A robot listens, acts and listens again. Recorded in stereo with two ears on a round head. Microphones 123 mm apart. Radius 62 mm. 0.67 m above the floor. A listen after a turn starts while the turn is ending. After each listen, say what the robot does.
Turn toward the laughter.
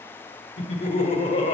Turn 55° left.
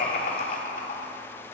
Turn 70° left.
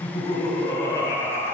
Turn 30° left.
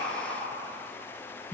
Turn 15° left.
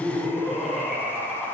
Facing the laughter.